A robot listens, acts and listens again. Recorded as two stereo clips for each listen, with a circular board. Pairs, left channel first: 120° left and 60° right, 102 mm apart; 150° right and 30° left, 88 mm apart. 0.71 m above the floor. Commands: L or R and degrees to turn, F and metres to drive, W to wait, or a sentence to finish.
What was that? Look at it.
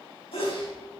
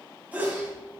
L100
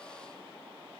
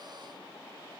I heard a sneeze from this way, but can't make it out now.